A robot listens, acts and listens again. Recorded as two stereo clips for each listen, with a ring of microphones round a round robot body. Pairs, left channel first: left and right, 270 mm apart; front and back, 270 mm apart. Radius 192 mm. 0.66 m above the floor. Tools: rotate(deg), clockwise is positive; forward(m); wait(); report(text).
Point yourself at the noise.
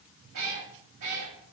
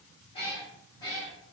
rotate(85)
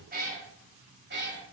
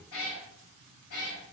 rotate(40)
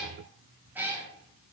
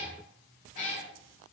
rotate(10)
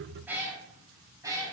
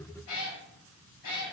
rotate(15)
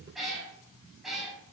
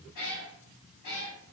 report("Found it: a cat meowing, straight ahead.")